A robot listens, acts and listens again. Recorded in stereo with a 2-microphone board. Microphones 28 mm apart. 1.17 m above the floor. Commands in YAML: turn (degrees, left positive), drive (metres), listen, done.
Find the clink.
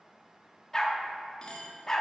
turn: 35
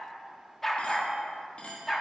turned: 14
turn: 135
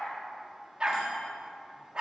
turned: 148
turn: -15
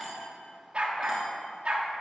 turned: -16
listen: true
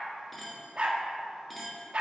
done: "Found it: a clink, straight ahead, 1 to 2 m away."